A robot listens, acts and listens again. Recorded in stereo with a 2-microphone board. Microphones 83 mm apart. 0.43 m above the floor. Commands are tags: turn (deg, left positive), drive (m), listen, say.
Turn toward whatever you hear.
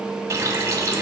<turn deg="-35"/>
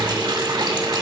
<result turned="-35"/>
<turn deg="-105"/>
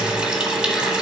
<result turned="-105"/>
<turn deg="-10"/>
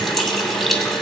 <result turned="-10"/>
<say>Found it: a running tap, straight ahead.</say>